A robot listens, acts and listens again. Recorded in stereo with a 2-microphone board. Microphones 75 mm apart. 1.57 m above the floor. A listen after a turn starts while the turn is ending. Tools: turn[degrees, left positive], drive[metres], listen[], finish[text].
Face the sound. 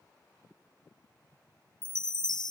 Thought: The chime: about 70° left or 110° left.
Action: turn[70]
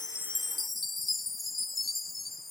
Action: finish[Found it: a chime, straight ahead.]